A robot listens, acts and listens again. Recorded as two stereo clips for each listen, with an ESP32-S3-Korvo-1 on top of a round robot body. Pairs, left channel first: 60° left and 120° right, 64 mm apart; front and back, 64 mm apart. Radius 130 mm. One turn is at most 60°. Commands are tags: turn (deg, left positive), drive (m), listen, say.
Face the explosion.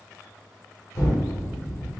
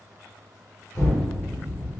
<turn deg="40"/>
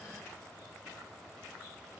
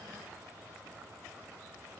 <say>Facing where the explosion came from. I can't hear it now.</say>